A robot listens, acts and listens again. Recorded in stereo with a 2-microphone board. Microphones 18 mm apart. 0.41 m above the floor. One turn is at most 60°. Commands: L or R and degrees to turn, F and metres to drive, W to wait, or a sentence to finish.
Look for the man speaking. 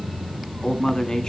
L40
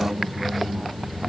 W
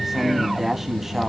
R25
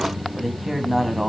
R20
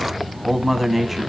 R15
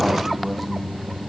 W
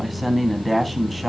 Facing the man speaking, 2 to 4 m away.